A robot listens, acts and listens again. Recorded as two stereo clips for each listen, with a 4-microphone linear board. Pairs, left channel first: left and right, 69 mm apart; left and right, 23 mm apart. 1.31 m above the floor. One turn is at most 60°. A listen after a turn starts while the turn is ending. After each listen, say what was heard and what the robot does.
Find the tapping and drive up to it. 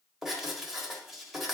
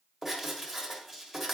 Keep listening.
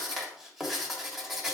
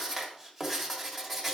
Keep listening.
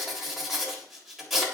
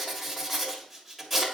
I can't make out tapping, only writing.